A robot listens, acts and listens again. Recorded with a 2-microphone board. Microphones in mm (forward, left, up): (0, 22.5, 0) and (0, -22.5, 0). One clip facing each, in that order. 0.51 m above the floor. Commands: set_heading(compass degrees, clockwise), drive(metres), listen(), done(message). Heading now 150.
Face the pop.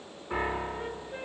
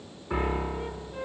listen()
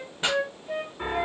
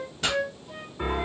set_heading(125)
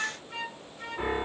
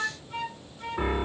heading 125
listen()
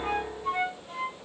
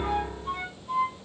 done("I heard a pop, but can't make it out now. It was about straight ahead or 130° left.")